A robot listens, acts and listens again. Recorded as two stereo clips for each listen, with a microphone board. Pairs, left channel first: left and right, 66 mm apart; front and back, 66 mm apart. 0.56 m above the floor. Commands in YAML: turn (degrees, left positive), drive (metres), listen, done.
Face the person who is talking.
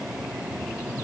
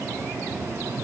listen: true
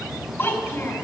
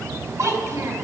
turn: 150
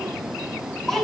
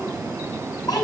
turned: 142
turn: 10
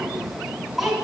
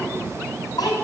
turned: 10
done: "Facing the child speaking."